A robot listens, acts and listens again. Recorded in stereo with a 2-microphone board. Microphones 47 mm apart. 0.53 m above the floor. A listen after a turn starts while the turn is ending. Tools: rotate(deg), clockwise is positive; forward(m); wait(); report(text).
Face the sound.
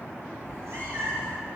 rotate(55)
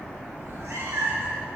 rotate(80)
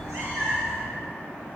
rotate(25)
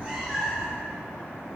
rotate(10)
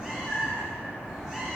rotate(10)
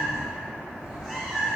report("Facing the cat meowing.")